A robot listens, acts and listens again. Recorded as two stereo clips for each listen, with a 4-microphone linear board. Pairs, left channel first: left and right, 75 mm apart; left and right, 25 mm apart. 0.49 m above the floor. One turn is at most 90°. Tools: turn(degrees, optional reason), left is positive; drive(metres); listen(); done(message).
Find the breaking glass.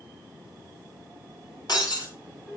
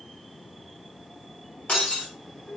turn(degrees=65, reason="The breaking glass: about 65° left or 115° left.")
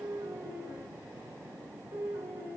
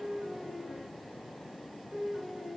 listen()
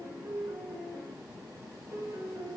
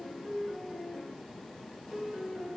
done("I heard breaking glass, but can't make it out now. It was about straight ahead or 50° left.")